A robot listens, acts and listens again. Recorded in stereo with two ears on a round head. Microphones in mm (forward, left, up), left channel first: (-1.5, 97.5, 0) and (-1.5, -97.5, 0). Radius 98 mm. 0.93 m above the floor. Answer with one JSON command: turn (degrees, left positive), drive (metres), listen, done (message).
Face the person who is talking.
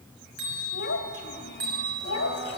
{"turn": 50}
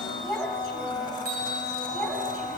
{"done": "Found it: a child speaking, straight ahead, over 4 m away."}